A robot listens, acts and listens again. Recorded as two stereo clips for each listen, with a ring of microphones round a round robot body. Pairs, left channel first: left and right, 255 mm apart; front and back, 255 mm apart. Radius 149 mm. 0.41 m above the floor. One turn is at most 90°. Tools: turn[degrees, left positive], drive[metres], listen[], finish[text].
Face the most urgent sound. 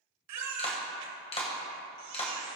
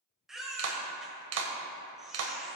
Thought: The baby crying: 90° right.
Action: turn[-90]
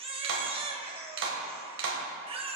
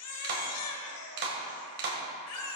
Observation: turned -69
Thought: The baby crying is now 20° right.
Action: turn[-20]
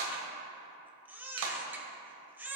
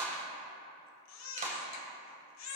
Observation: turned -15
Action: finish[Facing the baby crying, 1 to 2 m away.]